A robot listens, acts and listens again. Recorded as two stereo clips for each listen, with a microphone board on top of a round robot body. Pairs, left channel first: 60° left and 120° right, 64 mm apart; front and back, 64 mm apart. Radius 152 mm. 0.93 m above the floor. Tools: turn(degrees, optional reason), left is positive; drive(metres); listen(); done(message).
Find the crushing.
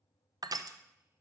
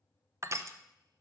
turn(degrees=-135, reason="The crushing: 135° right.")
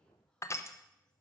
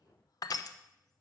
turn(degrees=20, reason="The crushing is now 20° left.")
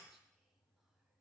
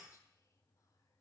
listen()
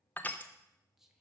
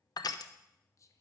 done("Found it: crushing, straight ahead, under 1 m away.")